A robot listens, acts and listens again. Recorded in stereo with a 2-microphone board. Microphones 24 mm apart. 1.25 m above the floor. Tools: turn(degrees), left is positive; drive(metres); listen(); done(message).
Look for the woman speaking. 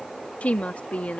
turn(degrees=90)
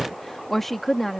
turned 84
turn(degrees=10)
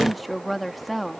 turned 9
done("Facing the woman speaking.")